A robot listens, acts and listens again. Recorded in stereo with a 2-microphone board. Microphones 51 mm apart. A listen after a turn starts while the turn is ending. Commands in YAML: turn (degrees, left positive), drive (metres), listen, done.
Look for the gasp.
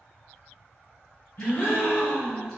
turn: 50
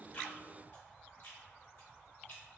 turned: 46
listen: true
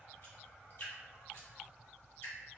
done: "I heard a gasp, but can't make it out now. It was about 5° left or 85° left."